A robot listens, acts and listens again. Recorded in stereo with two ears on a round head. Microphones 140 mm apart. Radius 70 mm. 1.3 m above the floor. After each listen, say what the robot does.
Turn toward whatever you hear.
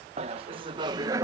Turn 20° right.
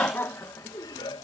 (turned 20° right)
Turn 25° left.
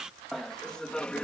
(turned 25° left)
Turn 10° left.
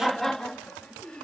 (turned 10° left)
Facing the laughter.